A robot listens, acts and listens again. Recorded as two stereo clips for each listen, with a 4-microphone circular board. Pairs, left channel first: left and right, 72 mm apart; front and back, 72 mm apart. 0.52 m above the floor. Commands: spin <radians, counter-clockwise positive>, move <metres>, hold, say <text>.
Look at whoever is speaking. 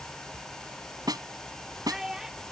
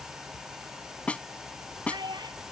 spin -3.05
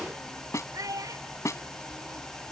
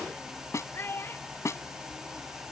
spin -0.96
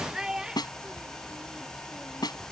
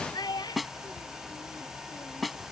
spin -0.17
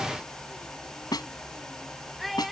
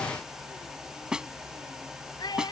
say Facing the child speaking.